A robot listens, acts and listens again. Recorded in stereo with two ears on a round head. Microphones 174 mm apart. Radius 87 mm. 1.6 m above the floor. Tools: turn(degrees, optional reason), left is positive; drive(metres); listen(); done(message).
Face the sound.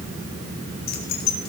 turn(degrees=50, reason="The keys jangling: about 50° left or 130° left.")
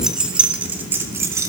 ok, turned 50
turn(degrees=-15, reason="So it is at 15° right.")
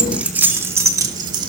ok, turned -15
turn(degrees=-25, reason="The keys jangling is now 25° right.")
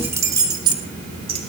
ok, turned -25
turn(degrees=-30, reason="The keys jangling is now 30° right.")
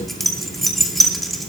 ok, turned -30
done("Found it: keys jangling, straight ahead, 2 to 4 m away.")